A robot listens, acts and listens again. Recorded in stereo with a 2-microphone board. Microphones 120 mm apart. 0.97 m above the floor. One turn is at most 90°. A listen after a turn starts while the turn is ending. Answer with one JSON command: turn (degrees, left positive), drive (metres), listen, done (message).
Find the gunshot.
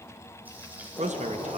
{"turn": 30}
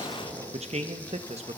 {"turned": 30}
{"turn": -15}
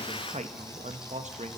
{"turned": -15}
{"done": "Facing where the gunshot came from. I can't hear it now."}